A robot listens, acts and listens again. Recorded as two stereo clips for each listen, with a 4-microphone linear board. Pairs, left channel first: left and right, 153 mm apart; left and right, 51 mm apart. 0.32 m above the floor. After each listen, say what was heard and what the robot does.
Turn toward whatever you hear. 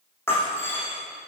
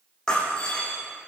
Turn 30° left.
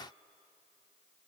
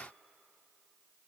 Keep listening.
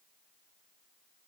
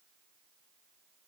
I heard breaking glass, but can't make it out now. It was about 15° right or 135° left.